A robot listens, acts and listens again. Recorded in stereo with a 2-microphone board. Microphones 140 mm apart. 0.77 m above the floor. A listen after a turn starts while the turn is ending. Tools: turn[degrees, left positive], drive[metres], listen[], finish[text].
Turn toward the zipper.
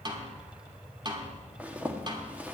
Action: turn[-30]
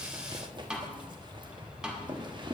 Thought: So it is at 140° right.
Action: turn[-140]
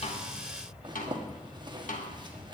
Thought: The zipper is now 40° right.
Action: turn[-40]
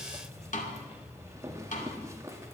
Thought: The zipper is now 25° right.
Action: turn[-25]
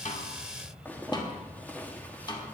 Thought: The zipper is now 15° left.
Action: turn[15]
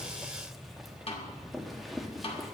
Action: finish[Facing the zipper, 1 to 2 m away.]